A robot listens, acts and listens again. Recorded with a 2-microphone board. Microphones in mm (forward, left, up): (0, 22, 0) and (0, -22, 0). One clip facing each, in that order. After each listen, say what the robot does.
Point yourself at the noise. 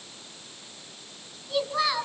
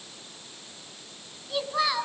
Turn 30° left.
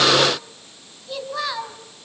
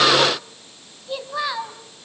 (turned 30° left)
Turn 30° right.
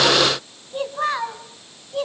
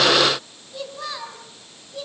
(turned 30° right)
Turn 50° left.
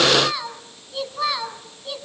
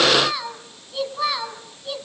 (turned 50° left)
Facing the child speaking, 2 to 4 m away.